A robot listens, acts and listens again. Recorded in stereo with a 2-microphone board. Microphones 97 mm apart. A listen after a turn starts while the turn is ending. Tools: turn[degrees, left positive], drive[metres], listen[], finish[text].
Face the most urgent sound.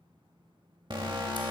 Thought: The alarm: about 50° right or 130° right.
Action: turn[-50]
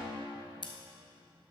Action: listen[]
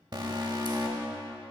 Thought: So it is at 60° right.
Action: turn[-60]
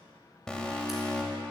Thought: The alarm is now 10° left.
Action: turn[10]
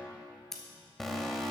Action: finish[Found it: an alarm, straight ahead.]